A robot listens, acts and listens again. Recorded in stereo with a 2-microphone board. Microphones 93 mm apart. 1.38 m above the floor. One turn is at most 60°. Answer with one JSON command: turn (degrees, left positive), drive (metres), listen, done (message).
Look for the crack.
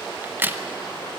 {"turn": -20}
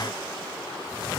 {"listen": true}
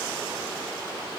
{"done": "I heard a crack, but can't make it out now. It was about straight ahead or 140° right."}